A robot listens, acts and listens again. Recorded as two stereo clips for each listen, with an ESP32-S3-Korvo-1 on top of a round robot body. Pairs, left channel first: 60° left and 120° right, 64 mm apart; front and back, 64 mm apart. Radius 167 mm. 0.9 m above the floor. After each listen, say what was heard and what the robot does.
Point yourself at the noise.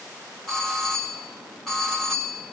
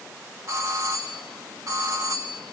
The doorbell: 145° left. Turn 145° left.
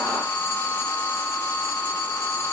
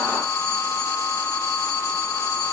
The doorbell is now 10° left. Turn 10° left.
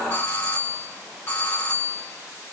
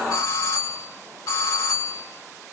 Found it: a doorbell, straight ahead.